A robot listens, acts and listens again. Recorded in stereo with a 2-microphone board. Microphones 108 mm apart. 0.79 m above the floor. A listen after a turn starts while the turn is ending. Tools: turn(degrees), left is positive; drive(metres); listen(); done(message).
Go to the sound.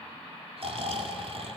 turn(degrees=-65)
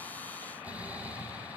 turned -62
turn(degrees=-15)
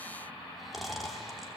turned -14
drive(metres=1.0)
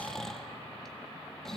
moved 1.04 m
drive(metres=1.0)
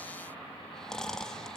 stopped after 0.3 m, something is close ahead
done("I am next to the snoring.")